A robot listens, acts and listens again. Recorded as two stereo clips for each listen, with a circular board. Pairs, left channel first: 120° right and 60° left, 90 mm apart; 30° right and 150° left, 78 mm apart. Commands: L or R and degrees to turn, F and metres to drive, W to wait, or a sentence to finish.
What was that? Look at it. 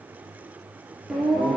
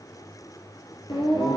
R25
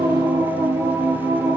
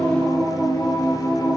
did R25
Facing the singing.